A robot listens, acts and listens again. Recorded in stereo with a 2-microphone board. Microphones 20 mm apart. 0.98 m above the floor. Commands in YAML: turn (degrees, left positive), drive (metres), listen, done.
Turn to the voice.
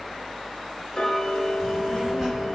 turn: -30
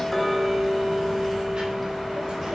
turn: -145
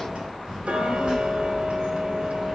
turn: -50
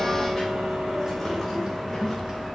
done: "Found it: a child speaking, straight ahead."